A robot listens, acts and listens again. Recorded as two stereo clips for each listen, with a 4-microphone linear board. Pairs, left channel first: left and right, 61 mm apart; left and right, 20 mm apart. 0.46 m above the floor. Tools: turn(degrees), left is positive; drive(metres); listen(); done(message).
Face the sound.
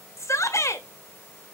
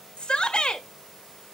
turn(degrees=55)
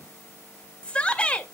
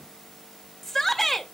turn(degrees=20)
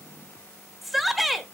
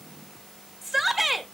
done("Facing the shout.")